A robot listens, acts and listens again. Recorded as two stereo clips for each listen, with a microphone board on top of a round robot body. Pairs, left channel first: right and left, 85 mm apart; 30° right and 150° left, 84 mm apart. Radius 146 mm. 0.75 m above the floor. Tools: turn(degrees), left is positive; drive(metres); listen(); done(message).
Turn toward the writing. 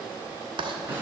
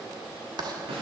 turn(degrees=115)
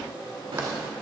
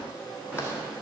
listen()
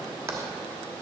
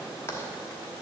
turn(degrees=30)
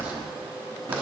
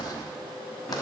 listen()
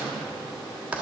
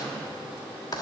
turn(degrees=15)
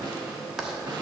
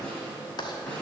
done("Facing the writing.")